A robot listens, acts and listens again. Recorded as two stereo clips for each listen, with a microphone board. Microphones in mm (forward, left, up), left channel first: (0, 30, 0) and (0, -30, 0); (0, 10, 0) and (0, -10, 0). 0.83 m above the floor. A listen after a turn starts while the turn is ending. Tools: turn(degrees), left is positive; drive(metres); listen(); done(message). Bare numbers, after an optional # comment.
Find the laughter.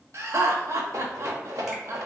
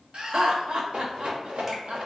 # The laughter: about 55° right or 125° right.
turn(-55)
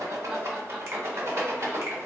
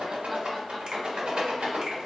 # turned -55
listen()
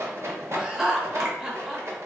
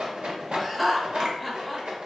# So it is at 10° right.
turn(-10)
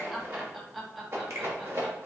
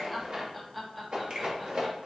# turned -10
done("Facing the laughter, 1 to 2 m away.")